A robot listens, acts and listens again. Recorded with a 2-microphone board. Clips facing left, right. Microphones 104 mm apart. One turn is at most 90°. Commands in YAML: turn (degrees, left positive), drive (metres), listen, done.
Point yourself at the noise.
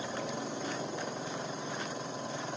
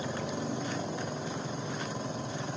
listen: true
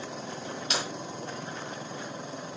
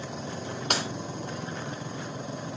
turn: -55
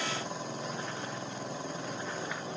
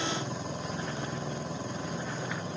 listen: true
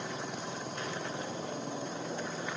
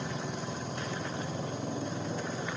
done: "I heard breaking glass, but can't make it out now. It was about straight ahead or 70° right."